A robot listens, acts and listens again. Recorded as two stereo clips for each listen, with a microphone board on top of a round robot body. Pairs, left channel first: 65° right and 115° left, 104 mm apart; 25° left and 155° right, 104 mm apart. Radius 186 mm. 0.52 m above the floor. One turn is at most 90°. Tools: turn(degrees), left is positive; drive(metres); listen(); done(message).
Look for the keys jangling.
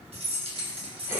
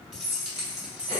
turn(degrees=90)
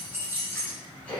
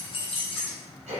turn(degrees=50)
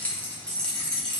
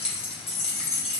turn(degrees=20)
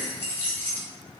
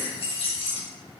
turn(degrees=10)
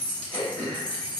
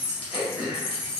turn(degrees=10)
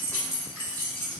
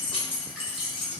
done("Found it: keys jangling, straight ahead, 1 to 2 m away.")